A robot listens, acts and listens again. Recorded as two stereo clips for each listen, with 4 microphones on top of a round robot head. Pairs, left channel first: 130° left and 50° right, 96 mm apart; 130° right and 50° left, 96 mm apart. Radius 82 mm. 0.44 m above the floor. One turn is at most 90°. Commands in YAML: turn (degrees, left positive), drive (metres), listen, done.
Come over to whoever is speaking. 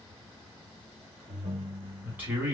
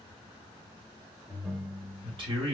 turn: 25
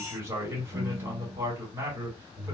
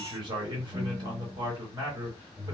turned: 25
turn: 15
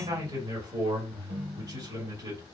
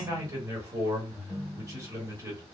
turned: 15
drive: 1.0
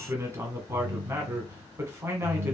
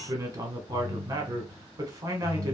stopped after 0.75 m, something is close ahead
done: "I am next to the man speaking."